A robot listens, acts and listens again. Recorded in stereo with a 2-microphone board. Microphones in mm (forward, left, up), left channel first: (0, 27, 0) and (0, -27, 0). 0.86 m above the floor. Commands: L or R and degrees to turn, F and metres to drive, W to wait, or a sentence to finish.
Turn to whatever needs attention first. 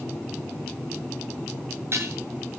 W
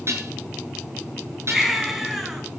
R30
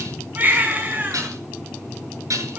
R150
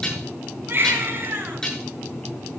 R40
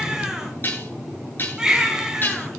R15
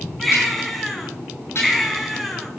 Found it: a baby crying, straight ahead.